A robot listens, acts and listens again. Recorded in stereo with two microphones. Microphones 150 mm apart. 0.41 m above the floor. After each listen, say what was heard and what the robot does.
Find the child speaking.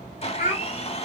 The child speaking: about 65° left or 115° left. Turn 65° left.
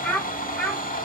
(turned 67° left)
Facing the child speaking, 1 to 2 m away.